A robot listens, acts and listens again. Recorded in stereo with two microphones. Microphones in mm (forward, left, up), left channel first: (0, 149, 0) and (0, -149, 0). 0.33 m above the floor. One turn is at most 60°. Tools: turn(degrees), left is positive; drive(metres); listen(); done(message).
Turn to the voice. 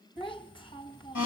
turn(degrees=15)
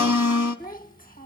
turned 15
turn(degrees=60)
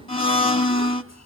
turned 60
turn(degrees=60)
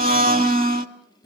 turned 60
turn(degrees=40)
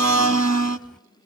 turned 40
done("Found it: a child speaking, straight ahead, 1 to 2 m away.")